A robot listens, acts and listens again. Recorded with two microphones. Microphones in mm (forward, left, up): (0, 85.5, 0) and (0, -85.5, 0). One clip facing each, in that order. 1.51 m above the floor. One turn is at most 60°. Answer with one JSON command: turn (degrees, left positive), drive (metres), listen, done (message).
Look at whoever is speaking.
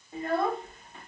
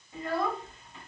{"turn": 60}
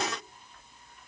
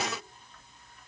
{"listen": true}
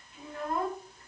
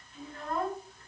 {"turn": 15}
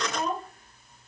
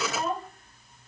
{"done": "Found it: a child speaking, straight ahead, 1 to 2 m away."}